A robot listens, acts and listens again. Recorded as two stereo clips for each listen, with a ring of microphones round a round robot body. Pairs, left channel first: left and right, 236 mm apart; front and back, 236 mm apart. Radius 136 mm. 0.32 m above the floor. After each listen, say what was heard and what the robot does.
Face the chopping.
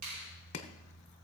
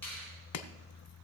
The chopping: 25° left. Turn 25° left.
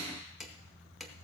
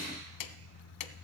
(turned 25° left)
Found it: chopping, straight ahead.